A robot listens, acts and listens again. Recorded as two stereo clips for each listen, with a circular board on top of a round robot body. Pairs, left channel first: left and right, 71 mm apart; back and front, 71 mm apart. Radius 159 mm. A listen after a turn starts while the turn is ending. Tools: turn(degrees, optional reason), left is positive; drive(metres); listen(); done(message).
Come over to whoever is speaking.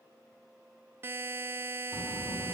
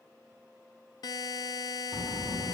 turn(degrees=85, reason="The child speaking: 85° left.")
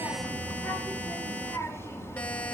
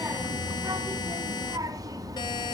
turn(degrees=35, reason="The child speaking is now 35° left.")
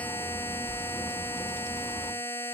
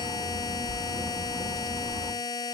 turn(degrees=20, reason="The child speaking is now 20° left.")
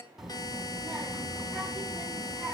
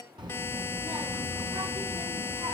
drive(metres=1.0)
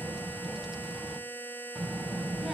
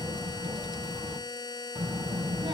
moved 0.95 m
turn(degrees=-10, reason="The child speaking is now 10° right.")
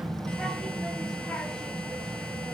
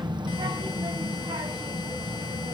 drive(metres=1.0)
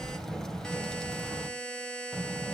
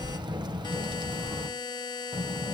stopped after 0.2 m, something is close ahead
done("Blocked. The child speaking is further on, straight ahead.")